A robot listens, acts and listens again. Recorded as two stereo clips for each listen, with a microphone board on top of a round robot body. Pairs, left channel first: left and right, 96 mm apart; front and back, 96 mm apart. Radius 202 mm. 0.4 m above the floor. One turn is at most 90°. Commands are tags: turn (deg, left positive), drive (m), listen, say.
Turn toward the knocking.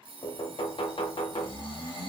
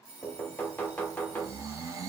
<turn deg="75"/>
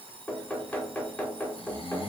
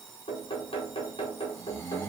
<turn deg="15"/>
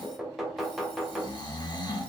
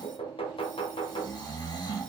<say>Facing the knocking, under 1 m away.</say>